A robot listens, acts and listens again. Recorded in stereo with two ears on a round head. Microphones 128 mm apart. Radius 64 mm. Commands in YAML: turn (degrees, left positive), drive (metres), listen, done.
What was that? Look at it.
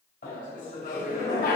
turn: 65
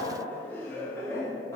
turn: 20
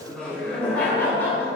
turn: 15
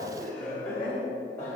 turn: 15
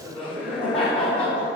done: "Found it: laughter, straight ahead."